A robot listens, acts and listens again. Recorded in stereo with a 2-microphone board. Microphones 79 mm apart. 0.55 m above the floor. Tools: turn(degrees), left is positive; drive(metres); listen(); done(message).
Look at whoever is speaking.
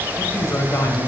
turn(degrees=35)
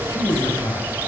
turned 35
turn(degrees=105)
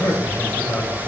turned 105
turn(degrees=40)
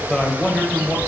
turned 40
turn(degrees=10)
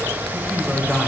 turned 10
done("Facing the man speaking, 2 to 4 m away.")